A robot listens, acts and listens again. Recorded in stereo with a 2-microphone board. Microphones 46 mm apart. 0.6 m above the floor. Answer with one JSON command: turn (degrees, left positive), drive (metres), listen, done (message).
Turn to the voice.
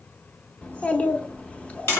{"turn": 30}
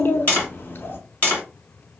{"turn": 120}
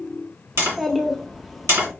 {"done": "Found it: a child speaking, straight ahead."}